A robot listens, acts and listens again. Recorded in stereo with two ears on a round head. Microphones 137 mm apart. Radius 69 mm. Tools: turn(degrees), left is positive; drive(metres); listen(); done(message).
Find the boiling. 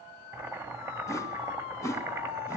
turn(degrees=-15)
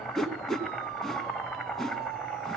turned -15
done("Facing the boiling.")